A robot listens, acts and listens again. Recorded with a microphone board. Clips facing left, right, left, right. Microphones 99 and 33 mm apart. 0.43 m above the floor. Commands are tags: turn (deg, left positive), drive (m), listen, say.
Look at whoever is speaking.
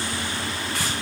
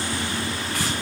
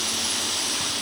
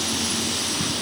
<listen/>
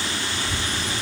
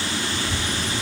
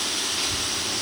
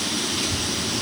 <turn deg="65"/>
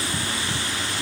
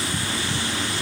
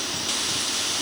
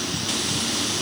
<listen/>
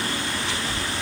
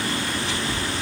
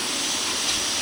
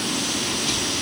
<say>Facing the child speaking.</say>